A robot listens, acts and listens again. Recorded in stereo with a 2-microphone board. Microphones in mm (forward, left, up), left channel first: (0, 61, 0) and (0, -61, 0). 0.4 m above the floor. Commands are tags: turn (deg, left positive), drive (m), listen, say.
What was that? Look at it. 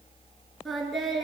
<turn deg="30"/>
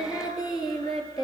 <turn deg="150"/>
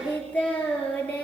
<turn deg="10"/>
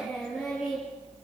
<say>Facing the singing.</say>